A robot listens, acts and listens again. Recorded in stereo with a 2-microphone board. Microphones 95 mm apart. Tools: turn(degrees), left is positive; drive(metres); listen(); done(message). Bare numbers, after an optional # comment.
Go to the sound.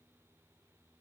listen()
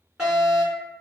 turn(-30)
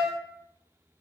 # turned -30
# So it is at 20° left.
turn(20)
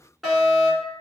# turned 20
drive(1.0)
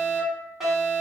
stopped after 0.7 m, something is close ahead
done("I am next to the fire alarm.")